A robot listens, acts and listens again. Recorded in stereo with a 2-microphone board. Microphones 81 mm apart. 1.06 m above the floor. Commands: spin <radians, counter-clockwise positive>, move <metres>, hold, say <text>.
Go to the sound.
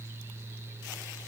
hold
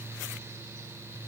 hold
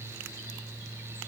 say I can't make out anything to turn to.